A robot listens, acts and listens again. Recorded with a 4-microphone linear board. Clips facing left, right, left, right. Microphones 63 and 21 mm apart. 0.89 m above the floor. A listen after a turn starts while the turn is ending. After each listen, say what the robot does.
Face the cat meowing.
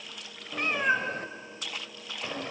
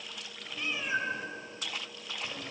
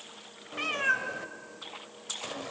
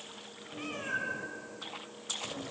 Turn 40° left.
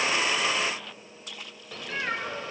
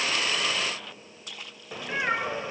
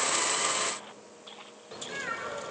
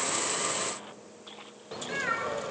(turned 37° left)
Turn 25° right.
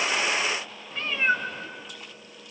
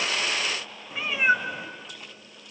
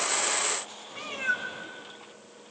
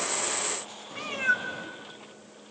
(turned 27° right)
Turn 15° right.
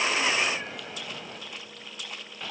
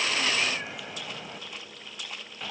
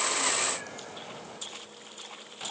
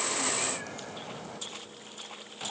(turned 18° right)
Found it: a cat meowing, straight ahead.